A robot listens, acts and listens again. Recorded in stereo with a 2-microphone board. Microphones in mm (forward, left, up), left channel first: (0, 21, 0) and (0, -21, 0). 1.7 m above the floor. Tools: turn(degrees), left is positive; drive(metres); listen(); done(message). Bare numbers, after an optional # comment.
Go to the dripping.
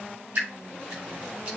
# The dripping: about 40° right or 140° right.
turn(-40)
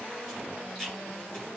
drive(1.0)
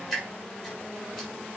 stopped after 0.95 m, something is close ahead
done("Blocked. The dripping is further on, straight ahead.")